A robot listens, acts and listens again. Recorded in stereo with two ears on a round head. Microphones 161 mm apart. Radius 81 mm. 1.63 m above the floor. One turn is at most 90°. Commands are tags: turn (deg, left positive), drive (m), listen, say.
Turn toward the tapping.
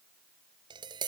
<turn deg="-25"/>
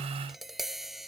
<say>Facing the tapping.</say>